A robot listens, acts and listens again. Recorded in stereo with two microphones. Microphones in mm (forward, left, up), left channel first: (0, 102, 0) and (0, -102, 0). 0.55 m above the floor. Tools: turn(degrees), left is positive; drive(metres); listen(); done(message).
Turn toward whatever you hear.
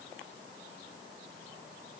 listen()
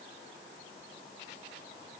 listen()
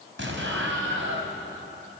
turn(degrees=-75)
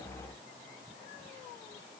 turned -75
listen()
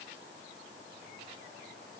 done("I heard an explosion, but can't make it out now. It was about straight ahead or 30° right.")